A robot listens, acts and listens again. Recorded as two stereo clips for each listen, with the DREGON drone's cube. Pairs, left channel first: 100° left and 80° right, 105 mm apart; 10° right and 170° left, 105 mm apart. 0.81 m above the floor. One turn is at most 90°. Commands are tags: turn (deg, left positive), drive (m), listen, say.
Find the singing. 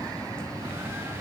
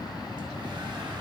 <listen/>
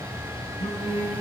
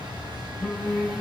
<turn deg="80"/>
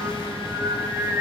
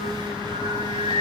<turn deg="-10"/>
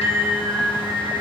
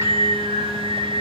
<say>Found it: singing, straight ahead.</say>